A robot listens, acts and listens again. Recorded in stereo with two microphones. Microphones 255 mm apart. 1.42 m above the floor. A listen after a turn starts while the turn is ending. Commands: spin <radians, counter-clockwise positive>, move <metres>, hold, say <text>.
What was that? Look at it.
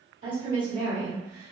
spin -0.79
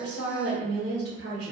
spin -2.01
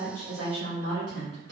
spin -1.13
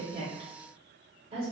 spin -0.52
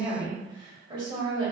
spin -0.44
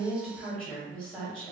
say Facing the woman speaking.